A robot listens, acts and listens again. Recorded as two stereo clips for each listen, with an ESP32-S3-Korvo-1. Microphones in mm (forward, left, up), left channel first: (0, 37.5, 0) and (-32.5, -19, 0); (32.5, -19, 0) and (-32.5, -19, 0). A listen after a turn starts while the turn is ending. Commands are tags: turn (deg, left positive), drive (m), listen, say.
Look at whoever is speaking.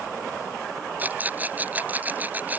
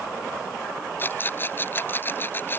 <listen/>
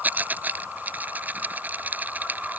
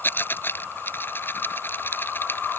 <listen/>
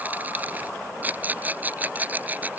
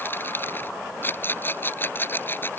<say>I can't make out anyone speaking, only a rattle.</say>